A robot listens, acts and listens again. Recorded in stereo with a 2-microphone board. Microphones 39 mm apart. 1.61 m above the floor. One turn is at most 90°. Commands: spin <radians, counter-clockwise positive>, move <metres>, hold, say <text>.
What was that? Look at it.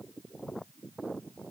hold
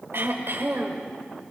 spin -1.13
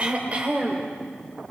spin -0.61
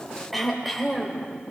say Facing the throat clearing.